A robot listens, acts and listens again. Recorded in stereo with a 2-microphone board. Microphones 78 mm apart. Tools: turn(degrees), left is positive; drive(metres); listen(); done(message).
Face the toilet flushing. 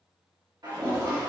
turn(degrees=-60)
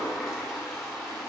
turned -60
done("Found it: a toilet flushing, straight ahead.")